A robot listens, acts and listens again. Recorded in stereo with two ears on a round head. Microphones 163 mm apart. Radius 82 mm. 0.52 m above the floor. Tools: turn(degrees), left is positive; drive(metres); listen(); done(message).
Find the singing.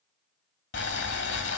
listen()
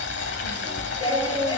turn(degrees=25)
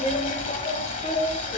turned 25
turn(degrees=35)
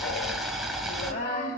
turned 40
turn(degrees=130)
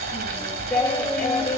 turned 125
turn(degrees=10)
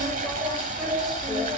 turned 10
done("Found it: singing, straight ahead.")